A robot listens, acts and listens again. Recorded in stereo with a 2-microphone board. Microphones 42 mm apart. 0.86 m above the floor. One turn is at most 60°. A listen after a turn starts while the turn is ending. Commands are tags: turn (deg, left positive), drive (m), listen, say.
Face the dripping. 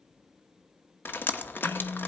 <turn deg="55"/>
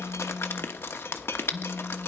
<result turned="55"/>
<turn deg="60"/>
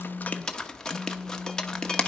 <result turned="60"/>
<turn deg="15"/>
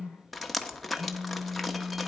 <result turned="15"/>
<say>Found it: dripping, straight ahead.</say>